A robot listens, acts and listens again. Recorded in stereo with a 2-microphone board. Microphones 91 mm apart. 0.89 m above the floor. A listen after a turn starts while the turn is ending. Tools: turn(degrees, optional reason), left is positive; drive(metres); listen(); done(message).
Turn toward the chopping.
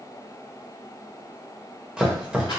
turn(degrees=-30)
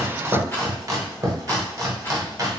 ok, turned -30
turn(degrees=-135, reason="So it is at 135° right.")
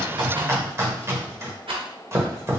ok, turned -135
turn(degrees=-35, reason="The chopping is now 35° right.")
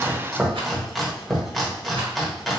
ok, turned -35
done("Found it: chopping, straight ahead.")